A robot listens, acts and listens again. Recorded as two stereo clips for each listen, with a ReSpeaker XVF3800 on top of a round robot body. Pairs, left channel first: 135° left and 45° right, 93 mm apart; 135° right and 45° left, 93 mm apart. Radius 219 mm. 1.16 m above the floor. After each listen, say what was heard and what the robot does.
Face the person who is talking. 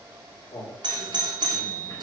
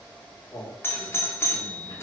The man speaking: 145° left. Turn 145° left.
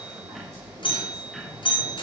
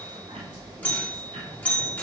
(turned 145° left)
Keep listening.
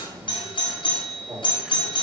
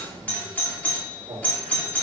The man speaking is now 10° left. Turn 10° left.
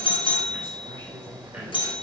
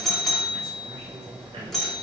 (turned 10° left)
Keep listening.
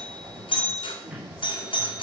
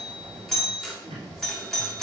Keep listening.
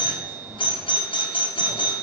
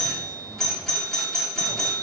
Facing where the man speaking came from. I can't hear it now.